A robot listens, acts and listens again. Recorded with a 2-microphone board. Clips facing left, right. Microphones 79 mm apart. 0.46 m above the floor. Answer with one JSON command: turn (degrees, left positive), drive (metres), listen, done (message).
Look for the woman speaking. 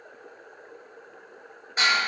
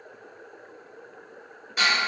{"listen": true}
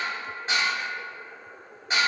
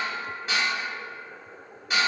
{"listen": true}
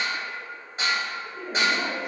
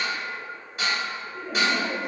{"turn": 55}
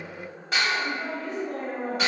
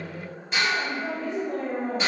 {"turn": 55}
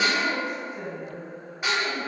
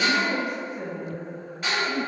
{"turn": -20}
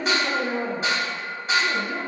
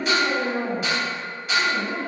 {"done": "Found it: a woman speaking, straight ahead, 1 to 2 m away."}